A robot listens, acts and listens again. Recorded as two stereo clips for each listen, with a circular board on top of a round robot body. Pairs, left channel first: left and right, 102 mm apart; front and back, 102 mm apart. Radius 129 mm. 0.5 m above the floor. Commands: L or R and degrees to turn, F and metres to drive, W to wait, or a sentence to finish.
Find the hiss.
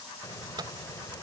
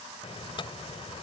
L30
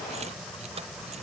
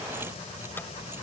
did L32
Found it: a hiss, straight ahead.